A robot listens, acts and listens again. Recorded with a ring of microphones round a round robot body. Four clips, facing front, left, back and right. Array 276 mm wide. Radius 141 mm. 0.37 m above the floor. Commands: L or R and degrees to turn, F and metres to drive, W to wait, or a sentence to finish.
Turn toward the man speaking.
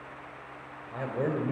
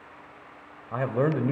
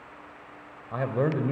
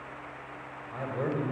L110
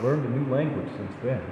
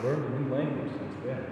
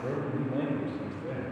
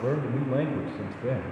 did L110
R30
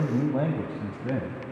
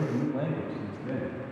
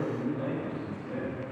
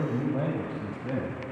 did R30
R15
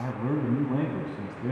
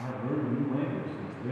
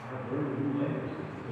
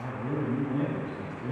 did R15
Facing the man speaking, 2 to 4 m away.